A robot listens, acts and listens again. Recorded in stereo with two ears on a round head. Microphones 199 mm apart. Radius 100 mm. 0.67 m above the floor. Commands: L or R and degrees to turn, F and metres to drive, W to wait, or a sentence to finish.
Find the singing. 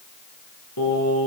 L90
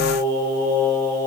R20
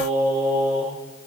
R10
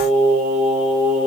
Facing the singing, over 4 m away.